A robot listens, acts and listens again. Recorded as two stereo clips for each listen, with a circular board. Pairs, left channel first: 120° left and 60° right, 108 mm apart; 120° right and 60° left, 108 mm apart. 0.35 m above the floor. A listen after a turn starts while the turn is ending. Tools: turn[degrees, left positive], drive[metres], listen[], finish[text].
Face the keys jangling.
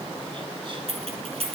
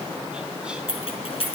Thought: The keys jangling: 85° right.
Action: turn[-85]
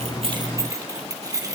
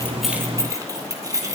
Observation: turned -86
Action: finish[Facing the keys jangling, 2 to 4 m away.]